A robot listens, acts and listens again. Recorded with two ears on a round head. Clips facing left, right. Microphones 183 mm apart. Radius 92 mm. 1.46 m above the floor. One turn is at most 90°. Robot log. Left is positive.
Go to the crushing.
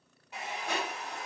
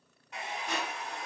note: The crushing: about 40° left or 140° left.
cmd yaw +40
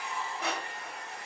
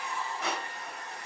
note: So it is at 10° left.
cmd yaw +10
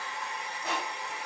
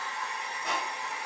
cmd fwd 1.0
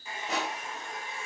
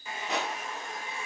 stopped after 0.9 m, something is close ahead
end: I am next to the crushing.